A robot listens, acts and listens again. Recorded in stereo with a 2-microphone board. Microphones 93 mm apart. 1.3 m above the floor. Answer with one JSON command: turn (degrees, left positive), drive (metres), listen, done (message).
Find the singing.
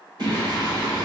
{"turn": -55}
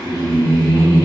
{"turn": -70}
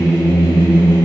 {"turn": 35}
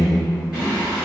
{"turn": -15}
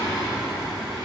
{"done": "Found it: singing, straight ahead, over 4 m away."}